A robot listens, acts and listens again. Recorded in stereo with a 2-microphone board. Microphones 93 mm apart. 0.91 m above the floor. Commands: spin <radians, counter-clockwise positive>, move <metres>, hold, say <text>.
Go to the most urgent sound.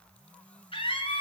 spin 1.31
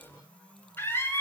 spin 0.44
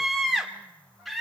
move 1.0
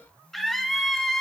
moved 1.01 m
move 1.0
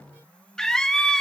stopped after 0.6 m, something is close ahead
say I am next to the scream.